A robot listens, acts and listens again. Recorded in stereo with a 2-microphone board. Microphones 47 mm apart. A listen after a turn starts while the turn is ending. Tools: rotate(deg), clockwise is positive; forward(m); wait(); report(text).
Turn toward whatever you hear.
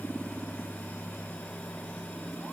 wait()
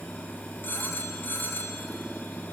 rotate(-55)
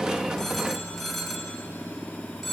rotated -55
report("Facing the phone ringing, 2 to 4 m away.")